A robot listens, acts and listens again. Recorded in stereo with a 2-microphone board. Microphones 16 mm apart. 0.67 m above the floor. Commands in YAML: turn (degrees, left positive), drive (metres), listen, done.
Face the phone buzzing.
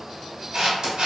listen: true
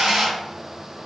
listen: true
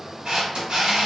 done: "I can't make out a phone buzzing to turn to."